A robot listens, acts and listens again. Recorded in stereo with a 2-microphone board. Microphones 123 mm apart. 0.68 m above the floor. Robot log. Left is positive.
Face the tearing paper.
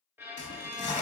note: The tearing paper: about 65° left or 115° left.
cmd yaw +65
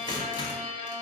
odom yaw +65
note: So it is at 40° left.
cmd yaw +40
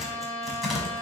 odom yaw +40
end: Facing the tearing paper, 1 to 2 m away.